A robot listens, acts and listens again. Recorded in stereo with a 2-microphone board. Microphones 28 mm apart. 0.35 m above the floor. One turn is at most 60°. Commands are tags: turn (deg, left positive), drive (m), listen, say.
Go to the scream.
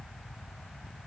<listen/>
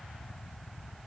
<listen/>
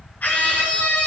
<turn deg="60"/>
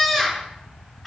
<drive m="1.0"/>
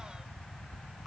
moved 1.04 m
<listen/>
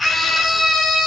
<drive m="1.0"/>
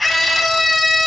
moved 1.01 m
<drive m="1.0"/>
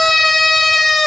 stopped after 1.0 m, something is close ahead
<say>Arrived at the scream, straight ahead.</say>